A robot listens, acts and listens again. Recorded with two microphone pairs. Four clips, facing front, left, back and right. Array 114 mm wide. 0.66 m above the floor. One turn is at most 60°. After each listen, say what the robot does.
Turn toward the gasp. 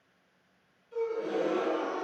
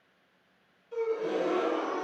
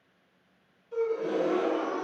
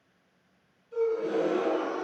Turn 60° left.
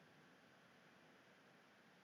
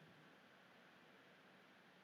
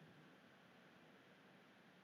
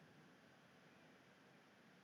Turn 60° left.
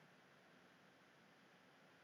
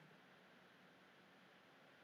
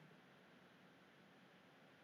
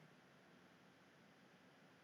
Turn 25° left.
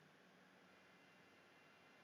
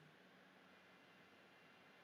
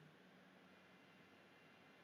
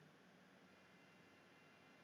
I heard a gasp from this way, but can't make it out now.